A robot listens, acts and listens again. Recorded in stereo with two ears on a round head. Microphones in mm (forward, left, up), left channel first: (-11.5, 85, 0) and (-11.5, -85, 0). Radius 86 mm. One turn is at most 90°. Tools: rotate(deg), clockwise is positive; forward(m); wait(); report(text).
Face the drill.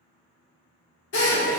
rotate(-70)
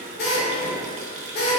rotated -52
rotate(-50)
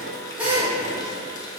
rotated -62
rotate(10)
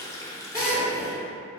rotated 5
report("Found it: a drill, straight ahead.")